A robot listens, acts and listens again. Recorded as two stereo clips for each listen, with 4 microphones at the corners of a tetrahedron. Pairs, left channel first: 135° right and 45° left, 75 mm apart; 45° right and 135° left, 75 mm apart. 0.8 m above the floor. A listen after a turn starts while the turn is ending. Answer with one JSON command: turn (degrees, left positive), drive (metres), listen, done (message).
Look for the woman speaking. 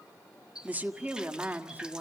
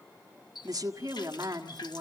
{"turn": 115}
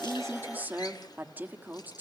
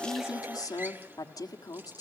{"turn": -20}
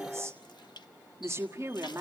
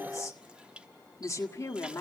{"done": "Found it: a woman speaking, straight ahead, 1 to 2 m away."}